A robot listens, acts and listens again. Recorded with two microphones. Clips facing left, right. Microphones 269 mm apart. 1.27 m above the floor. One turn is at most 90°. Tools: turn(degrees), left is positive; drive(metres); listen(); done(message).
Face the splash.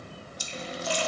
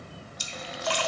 turn(degrees=-70)
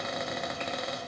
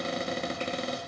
listen()
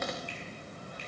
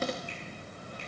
done("I heard a splash, but can't make it out now. It was about straight ahead or 40° right.")